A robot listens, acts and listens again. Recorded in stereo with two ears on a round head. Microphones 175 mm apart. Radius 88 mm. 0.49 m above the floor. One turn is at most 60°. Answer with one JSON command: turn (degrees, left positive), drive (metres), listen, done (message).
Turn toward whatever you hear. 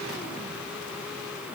{"listen": true}
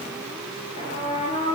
{"turn": 30}
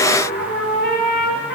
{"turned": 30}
{"turn": 60}
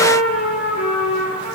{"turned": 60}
{"turn": 40}
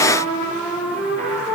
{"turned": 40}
{"turn": 10}
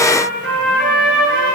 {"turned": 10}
{"done": "Facing the trumpet."}